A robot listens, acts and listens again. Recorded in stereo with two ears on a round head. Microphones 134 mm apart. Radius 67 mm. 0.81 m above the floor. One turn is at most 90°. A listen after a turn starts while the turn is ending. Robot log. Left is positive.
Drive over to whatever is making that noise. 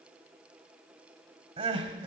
note: The crying: about 40° right or 140° right.
cmd yaw -40
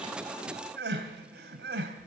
note: So it is at 100° right.
cmd yaw -90
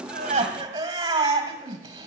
note: The crying is now 25° right.
cmd yaw -25
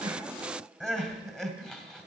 cmd fwd 1.0
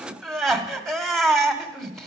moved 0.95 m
cmd fwd 1.0
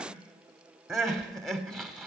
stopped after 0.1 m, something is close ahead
end: I am next to the crying.